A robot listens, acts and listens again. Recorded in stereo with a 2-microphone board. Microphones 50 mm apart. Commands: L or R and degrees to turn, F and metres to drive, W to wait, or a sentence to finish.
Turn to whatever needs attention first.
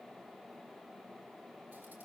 W
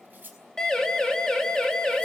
L30
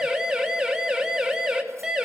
R15
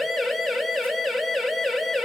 Facing the siren, 2 to 4 m away.